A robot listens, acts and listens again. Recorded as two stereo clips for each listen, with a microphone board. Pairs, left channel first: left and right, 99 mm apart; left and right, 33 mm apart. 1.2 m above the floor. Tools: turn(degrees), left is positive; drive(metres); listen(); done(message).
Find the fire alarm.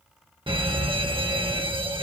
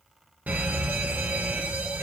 turn(degrees=-55)
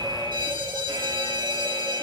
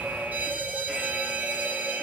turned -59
turn(degrees=-55)
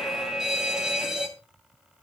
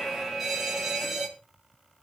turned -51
done("Facing the fire alarm.")